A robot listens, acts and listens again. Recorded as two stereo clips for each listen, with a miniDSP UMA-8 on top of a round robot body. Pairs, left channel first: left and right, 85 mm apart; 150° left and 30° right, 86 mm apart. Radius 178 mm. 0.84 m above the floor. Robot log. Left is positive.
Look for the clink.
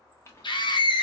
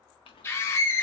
note: The clink: 150° left.
cmd yaw +150
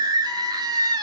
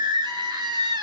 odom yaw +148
cmd idle
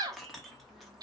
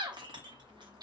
end: Facing the clink, under 1 m away.